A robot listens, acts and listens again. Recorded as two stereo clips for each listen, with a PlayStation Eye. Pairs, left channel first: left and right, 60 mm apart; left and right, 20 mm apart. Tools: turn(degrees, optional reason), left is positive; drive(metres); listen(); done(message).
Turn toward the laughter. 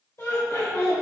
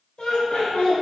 turn(degrees=50, reason="The laughter: about 50° left or 130° left.")
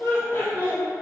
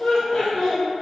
turn(degrees=35, reason="So it is at 35° left.")
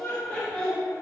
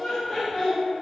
turn(degrees=10, reason="The laughter is now 10° left.")
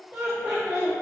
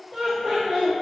turn(degrees=-15, reason="The laughter is now 15° right.")
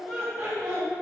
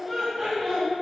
turn(degrees=-10, reason="The laughter is now 10° right.")
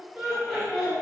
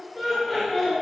turn(degrees=-10, reason="The laughter is now 10° right.")
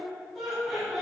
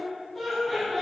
done("Found it: laughter, straight ahead, 2 to 4 m away.")